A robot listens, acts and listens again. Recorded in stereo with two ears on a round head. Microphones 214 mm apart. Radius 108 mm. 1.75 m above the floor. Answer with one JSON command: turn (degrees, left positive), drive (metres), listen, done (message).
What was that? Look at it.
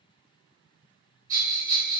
{"turn": -35}
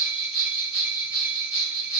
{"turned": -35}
{"done": "Facing the bell, 1 to 2 m away."}